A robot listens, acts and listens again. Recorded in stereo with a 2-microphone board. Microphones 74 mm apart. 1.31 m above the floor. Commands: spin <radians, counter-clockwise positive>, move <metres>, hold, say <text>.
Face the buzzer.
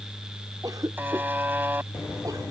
spin -0.44
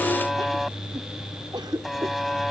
say Facing the buzzer.